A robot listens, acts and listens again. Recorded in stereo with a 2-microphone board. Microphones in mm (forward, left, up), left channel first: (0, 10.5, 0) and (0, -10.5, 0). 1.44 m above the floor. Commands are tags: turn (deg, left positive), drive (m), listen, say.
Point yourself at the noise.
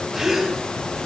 <turn deg="-25"/>
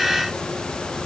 <listen/>
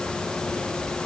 <say>I heard a gasp, but can't make it out now. It was about straight ahead or 130° right.</say>